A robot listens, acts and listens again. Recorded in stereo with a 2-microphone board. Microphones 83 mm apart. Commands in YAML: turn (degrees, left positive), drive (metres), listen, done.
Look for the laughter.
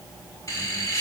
turn: 40
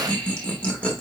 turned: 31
turn: 20
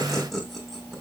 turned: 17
done: "Facing the laughter, 1 to 2 m away."